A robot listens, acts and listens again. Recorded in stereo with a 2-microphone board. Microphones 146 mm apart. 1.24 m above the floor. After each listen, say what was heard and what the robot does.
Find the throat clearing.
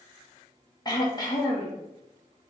The throat clearing: about 30° left or 150° left. Turn 30° left.
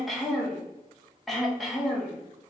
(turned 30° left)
Facing the throat clearing.